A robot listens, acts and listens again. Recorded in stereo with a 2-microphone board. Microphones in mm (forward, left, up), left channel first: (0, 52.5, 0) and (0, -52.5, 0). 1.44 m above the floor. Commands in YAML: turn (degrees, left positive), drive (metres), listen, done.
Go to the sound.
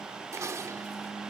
turn: -30
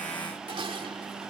turn: -120
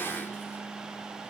listen: true
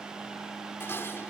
turn: 25
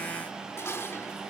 turn: 25
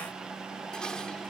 turn: 10
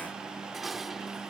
drive: 1.0
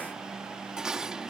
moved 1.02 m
drive: 1.0
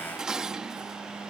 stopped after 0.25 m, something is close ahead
turn: -10
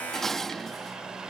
done: "Arrived at the dishes clattering, straight ahead."